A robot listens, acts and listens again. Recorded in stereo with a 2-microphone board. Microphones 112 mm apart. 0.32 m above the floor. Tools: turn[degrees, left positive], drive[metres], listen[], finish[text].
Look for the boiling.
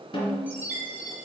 Action: listen[]
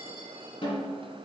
Action: listen[]
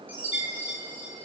Action: finish[I can't make out boiling to turn to.]